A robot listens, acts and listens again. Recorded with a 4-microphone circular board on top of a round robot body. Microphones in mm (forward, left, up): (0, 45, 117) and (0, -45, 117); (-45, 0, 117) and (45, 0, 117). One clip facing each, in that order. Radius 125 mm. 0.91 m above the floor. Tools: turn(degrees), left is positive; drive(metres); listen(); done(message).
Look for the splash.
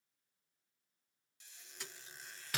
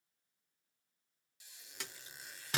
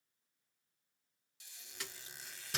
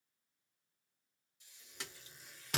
turn(degrees=-65)
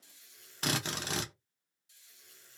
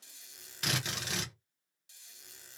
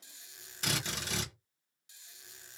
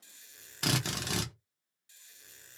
done("Facing where the splash came from. I can't hear it now.")